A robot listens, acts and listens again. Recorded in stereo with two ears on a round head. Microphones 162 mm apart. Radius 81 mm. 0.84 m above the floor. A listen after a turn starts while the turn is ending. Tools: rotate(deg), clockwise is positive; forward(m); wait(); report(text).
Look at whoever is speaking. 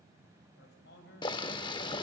rotate(-70)
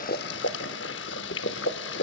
wait()
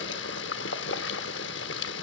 wait()
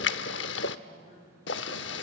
rotate(-40)
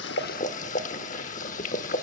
wait()
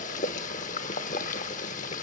wait()
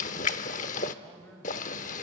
report("Facing the man speaking.")